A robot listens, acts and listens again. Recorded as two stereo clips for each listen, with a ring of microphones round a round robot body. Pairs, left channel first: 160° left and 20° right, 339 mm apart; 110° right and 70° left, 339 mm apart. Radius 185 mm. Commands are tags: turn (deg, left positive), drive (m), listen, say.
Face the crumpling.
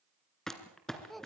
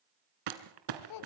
<turn deg="70"/>
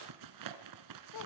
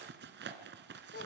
<turn deg="10"/>
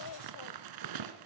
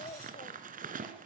<say>Facing the crumpling.</say>